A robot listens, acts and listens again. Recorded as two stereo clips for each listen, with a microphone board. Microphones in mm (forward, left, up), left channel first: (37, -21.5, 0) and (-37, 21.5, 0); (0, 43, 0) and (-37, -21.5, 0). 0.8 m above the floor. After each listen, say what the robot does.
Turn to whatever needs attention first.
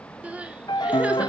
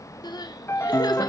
Turn 75° left.
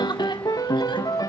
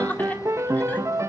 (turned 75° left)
Keep listening.
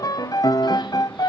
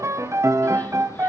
Keep listening.
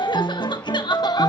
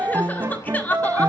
Facing the crying, 1 to 2 m away.